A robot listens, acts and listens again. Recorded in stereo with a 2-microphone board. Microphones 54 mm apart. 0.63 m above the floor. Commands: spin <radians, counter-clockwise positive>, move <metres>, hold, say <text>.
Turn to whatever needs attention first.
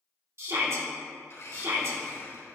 spin -0.96
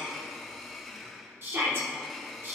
spin -0.87
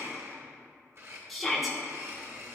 say Found it: a shout, straight ahead, 1 to 2 m away.